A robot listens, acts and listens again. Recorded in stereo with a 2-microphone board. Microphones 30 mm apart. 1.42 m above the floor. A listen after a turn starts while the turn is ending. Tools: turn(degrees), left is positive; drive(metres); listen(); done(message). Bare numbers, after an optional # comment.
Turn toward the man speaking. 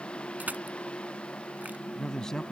# The man speaking: about 20° left or 160° left.
turn(20)
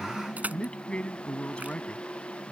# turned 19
# The man speaking: about 35° left or 145° left.
turn(35)
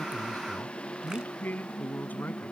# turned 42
# So it is at 105° left.
turn(105)
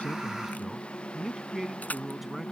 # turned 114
# The man speaking is now 10° right.
turn(-10)
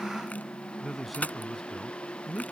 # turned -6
done("Found it: a man speaking, straight ahead.")